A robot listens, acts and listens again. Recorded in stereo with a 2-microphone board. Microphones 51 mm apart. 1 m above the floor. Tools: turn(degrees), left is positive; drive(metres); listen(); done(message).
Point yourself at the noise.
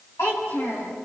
turn(degrees=65)
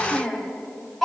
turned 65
done("Found it: a child speaking, straight ahead, over 4 m away.")